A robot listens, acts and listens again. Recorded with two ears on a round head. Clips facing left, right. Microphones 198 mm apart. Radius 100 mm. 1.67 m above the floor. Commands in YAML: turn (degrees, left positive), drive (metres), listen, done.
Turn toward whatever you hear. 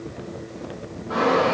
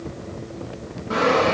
turn: -40
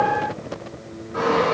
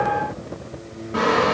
turn: -100
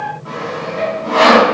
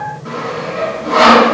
turn: -30
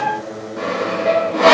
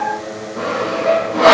done: "Facing the sawing, 2 to 4 m away."